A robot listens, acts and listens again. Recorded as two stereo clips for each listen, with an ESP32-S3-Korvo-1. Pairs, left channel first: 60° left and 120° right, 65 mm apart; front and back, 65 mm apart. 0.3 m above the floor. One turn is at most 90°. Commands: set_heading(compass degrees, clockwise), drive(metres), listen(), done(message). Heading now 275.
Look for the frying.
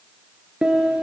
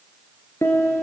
listen()
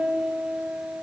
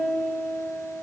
listen()
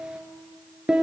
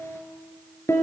done("I can't make out frying, only a piano.")